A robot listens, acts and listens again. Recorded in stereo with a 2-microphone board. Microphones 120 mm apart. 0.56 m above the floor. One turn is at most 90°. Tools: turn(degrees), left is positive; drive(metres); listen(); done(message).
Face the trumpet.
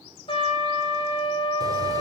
turn(degrees=50)
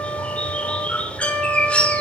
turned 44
turn(degrees=15)
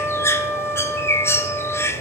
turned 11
done("Facing the trumpet.")